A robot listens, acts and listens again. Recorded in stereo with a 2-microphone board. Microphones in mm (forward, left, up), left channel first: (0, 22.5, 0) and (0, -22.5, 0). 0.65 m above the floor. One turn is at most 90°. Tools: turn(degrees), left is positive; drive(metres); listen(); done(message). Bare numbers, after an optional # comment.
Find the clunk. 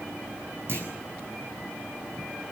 # The clunk: about 55° right or 125° right.
turn(-55)
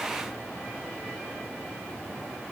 listen()
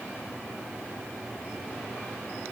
done("I heard a clunk, but can't make it out now. It was about straight ahead or 70° right.")